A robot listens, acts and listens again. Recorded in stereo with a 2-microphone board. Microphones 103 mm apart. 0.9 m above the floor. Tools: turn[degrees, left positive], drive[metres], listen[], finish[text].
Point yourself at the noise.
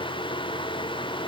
Action: listen[]
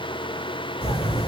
Thought: The bird: about 65° left or 115° left.
Action: turn[65]
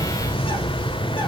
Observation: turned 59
Thought: So it is at 55° left.
Action: turn[55]
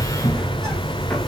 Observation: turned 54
Action: finish[Found it: a bird, straight ahead, 1 to 2 m away.]